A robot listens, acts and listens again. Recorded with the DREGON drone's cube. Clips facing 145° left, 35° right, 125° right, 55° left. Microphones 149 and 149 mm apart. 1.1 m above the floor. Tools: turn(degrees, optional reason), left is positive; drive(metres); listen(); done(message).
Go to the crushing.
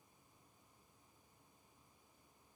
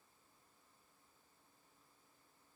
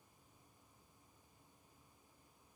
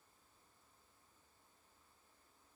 listen()
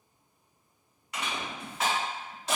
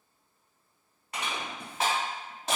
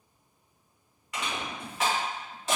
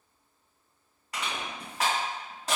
drive(metres=1.0)
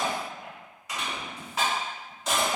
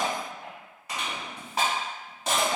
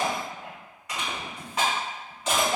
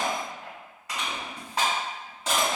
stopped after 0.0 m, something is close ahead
done("Blocked. The crushing is further on, straight ahead.")